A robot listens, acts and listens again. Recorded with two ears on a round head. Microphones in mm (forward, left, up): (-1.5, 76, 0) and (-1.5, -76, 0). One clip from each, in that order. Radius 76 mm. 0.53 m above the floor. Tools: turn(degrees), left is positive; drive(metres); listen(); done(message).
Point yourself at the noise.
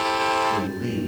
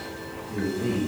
turn(degrees=75)
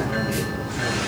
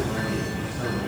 listen()
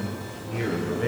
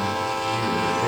turn(degrees=10)
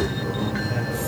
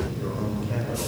done("Found it: a man speaking, straight ahead, 2 to 4 m away.")